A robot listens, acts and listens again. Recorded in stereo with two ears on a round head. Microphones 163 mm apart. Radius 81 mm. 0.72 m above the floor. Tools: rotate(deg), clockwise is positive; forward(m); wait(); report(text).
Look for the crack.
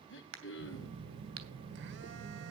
rotate(90)
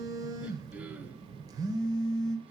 report("Facing where the crack came from. I can't hear it now.")